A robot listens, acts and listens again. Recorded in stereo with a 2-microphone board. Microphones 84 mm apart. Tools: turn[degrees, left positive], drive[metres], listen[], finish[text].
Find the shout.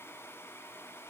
Action: listen[]
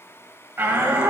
Thought: The shout: about 25° right or 155° right.
Action: turn[-25]
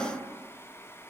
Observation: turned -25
Action: listen[]
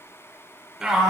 Action: finish[Found it: a shout, straight ahead, 1 to 2 m away.]